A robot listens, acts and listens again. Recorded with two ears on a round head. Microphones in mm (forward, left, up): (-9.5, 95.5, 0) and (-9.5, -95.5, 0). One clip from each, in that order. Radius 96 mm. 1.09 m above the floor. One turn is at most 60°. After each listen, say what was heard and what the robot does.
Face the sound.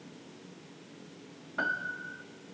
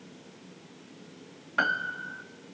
The piano: about 55° right or 125° right. Turn 55° right.
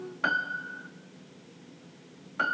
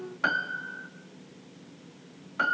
Found it: a piano, straight ahead.